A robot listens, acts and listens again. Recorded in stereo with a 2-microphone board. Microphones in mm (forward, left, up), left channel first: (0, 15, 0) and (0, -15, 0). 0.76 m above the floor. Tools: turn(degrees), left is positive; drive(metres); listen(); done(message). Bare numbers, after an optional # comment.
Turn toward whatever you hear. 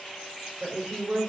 # The woman speaking: about 70° right or 110° right.
turn(-70)
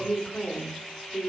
done("Facing the woman speaking.")